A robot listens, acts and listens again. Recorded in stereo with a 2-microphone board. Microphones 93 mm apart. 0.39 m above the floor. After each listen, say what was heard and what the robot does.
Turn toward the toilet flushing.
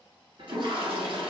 The toilet flushing: about 65° right or 115° right. Turn 65° right.
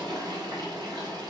So it is at 50° right. Turn 50° right.
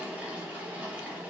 The toilet flushing is now 15° right. Turn 15° right.
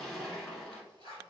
Facing the toilet flushing, 1 to 2 m away.